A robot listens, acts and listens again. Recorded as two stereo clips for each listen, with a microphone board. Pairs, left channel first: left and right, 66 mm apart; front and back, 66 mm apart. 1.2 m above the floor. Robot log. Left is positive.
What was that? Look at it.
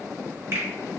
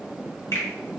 note: The finger snap: 35° right.
cmd yaw -35
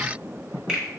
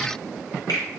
end: Facing the finger snap.